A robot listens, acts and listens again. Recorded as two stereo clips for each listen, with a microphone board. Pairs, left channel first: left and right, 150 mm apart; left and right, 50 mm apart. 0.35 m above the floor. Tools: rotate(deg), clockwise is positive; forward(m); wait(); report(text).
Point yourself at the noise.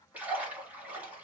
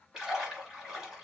rotate(30)
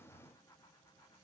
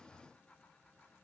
wait()
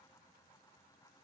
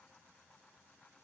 report("I heard a splash, but can't make it out now. It was about 20° left or 140° right.")